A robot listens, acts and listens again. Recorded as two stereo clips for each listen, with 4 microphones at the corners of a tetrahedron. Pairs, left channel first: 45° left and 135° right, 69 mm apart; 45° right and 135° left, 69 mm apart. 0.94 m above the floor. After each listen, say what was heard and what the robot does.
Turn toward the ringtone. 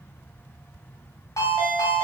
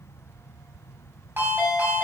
The ringtone: 80° left. Turn 80° left.
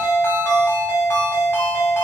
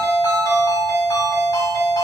The ringtone is now 10° right. Turn 10° right.
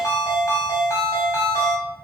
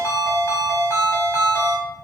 Found it: a ringtone, straight ahead, 2 to 4 m away.